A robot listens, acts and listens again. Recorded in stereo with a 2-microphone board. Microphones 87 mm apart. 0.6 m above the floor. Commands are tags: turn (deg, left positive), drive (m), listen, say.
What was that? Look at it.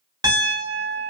<turn deg="-55"/>
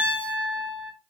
<turn deg="-70"/>
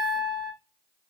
<say>Facing the piano, 1 to 2 m away.</say>